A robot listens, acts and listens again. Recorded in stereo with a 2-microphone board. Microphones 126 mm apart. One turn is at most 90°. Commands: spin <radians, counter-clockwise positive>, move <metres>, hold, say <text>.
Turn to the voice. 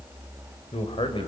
spin 0.79
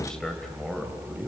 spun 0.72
say Facing the man speaking, 2 to 4 m away.